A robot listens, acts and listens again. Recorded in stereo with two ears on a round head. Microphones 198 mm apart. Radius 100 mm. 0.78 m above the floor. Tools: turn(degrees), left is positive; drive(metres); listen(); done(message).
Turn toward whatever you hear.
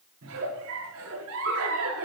turn(degrees=-90)
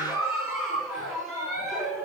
done("Facing the giggle, over 4 m away.")